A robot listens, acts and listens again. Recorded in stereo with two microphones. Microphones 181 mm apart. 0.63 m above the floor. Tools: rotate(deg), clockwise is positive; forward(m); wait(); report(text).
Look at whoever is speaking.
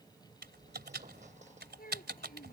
rotate(-55)
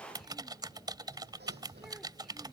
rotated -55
wait()
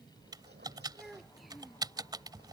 report("Found it: a child speaking, straight ahead.")